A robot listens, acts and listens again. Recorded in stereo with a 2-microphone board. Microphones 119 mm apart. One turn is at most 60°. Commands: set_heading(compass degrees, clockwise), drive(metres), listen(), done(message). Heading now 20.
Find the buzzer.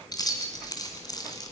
listen()
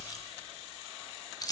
listen()
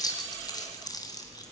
done("I can't make out a buzzer, only keys jangling.")